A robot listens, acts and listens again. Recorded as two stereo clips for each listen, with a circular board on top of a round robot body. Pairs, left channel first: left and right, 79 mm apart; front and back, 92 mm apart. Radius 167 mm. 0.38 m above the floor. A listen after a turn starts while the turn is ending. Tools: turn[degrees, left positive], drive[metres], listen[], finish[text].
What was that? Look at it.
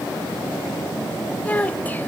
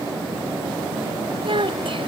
Thought: The child speaking: 160° left.
Action: turn[160]
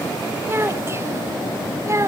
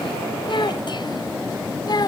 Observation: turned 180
Thought: The child speaking is now 40° right.
Action: turn[-40]
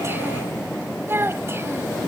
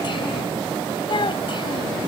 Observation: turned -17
Thought: The child speaking is now 30° right.
Action: turn[-30]
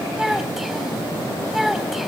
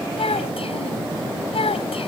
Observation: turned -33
Action: finish[Found it: a child speaking, straight ahead.]